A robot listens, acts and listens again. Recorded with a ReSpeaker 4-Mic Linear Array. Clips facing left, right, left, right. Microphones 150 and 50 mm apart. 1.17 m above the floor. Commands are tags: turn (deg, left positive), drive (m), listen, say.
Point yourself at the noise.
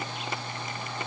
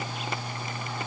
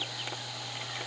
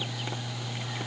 <listen/>
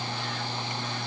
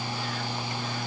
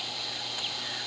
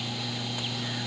<listen/>
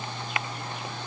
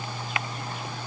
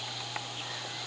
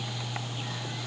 <say>I can't make out anything to turn to.</say>